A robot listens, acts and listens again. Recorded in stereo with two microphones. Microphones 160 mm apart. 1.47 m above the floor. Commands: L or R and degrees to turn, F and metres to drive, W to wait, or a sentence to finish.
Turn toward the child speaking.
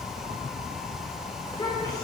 L25
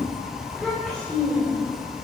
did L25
Found it: a child speaking, straight ahead, over 4 m away.